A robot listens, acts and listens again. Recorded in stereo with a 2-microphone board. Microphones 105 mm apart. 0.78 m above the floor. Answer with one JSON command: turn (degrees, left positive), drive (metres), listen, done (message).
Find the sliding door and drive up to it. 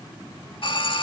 {"listen": true}
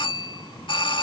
{"listen": true}
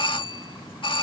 {"done": "I can't make out a sliding door, only a doorbell."}